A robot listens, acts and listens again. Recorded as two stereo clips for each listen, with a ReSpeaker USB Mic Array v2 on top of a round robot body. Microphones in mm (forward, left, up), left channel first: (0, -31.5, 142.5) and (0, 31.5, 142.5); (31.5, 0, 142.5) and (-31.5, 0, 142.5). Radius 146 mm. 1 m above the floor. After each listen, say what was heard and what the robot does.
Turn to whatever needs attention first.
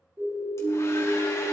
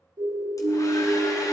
The siren: 145° left. Turn 145° left.
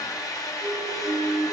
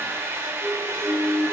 The siren is now 60° left. Turn 60° left.
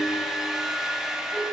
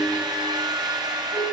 Keep listening.
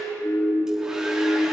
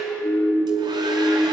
Facing the siren.